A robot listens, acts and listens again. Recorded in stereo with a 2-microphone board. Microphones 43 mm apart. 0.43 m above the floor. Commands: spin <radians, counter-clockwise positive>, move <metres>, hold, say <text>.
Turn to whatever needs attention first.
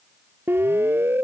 spin -0.96
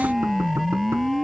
say Facing the siren.